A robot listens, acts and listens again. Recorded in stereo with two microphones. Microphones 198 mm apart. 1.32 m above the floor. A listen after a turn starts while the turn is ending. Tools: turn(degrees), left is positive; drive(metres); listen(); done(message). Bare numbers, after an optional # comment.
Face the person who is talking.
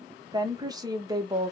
# The woman speaking: about 20° right or 160° right.
turn(-20)
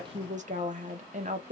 # So it is at 140° right.
turn(-140)
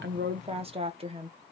# The woman speaking is now 30° right.
turn(-30)
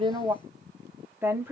# The woman speaking is now 10° right.
turn(-10)
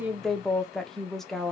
done("Found it: a woman speaking, straight ahead.")